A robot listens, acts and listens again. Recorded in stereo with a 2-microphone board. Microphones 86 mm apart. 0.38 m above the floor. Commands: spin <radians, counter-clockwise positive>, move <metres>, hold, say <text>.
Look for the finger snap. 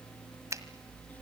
spin -0.70
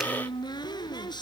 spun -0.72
hold
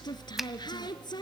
hold
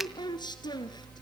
say I heard a finger snap, but can't make it out now. It was about 5° left or 100° right.